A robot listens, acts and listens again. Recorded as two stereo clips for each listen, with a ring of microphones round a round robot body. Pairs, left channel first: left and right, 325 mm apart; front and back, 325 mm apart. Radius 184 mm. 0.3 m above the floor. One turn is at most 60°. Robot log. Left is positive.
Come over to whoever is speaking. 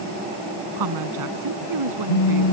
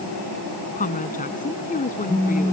note: The woman speaking: 65° right.
cmd yaw -60
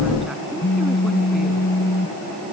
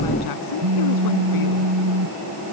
cmd idle
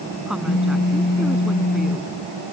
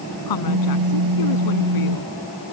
cmd fwd 1.0
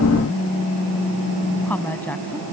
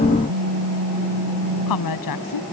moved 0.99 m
cmd fwd 1.0
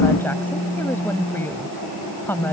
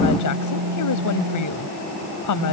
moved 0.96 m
cmd fwd 1.0
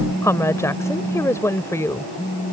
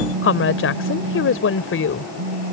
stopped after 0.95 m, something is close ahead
note: The woman speaking is now 15° left.
cmd yaw +15
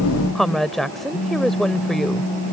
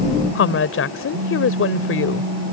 end: Arrived at the woman speaking, straight ahead.